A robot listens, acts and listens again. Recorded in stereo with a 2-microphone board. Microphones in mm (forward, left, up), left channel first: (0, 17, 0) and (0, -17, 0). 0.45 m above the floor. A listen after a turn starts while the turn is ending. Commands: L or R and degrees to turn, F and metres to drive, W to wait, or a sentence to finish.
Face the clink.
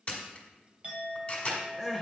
R40
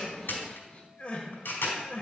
W
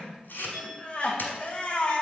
Facing the clink, 1 to 2 m away.